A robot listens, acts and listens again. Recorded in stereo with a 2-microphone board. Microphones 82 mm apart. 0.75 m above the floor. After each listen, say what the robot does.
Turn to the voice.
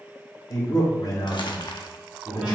Turn 60° left.
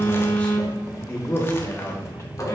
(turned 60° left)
Turn 35° left.
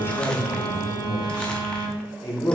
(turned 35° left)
Turn 45° left.
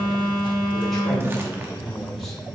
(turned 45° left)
Facing the man speaking.